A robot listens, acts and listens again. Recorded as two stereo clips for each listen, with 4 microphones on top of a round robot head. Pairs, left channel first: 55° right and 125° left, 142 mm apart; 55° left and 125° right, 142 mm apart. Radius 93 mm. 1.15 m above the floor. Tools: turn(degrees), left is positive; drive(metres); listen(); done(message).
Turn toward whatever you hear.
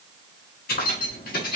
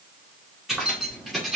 turn(degrees=-40)
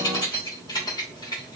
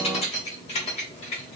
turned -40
done("Found it: keys jangling, straight ahead, 2 to 4 m away.")